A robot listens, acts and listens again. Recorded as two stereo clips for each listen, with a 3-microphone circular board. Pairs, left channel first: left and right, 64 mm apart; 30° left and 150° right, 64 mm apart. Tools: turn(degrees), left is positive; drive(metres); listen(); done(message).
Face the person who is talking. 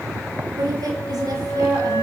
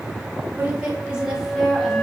turn(degrees=-65)
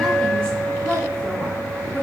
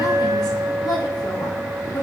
turn(degrees=25)
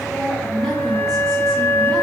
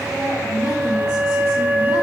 done("Facing the woman speaking.")